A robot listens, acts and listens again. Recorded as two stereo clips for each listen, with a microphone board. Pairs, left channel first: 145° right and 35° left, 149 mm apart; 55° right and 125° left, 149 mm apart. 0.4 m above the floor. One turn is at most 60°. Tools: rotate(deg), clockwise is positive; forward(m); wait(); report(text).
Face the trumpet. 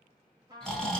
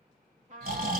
rotate(-60)
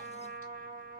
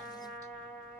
rotate(-25)
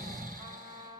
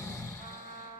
rotate(20)
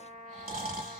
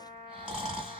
report("Facing the trumpet, 1 to 2 m away.")